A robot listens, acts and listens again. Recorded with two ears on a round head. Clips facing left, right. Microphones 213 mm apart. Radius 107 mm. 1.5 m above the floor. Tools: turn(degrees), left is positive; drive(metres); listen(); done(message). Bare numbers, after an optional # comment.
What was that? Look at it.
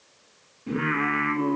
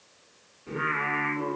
# The singing: about 45° left or 135° left.
turn(45)
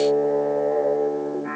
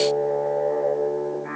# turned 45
done("Found it: singing, straight ahead.")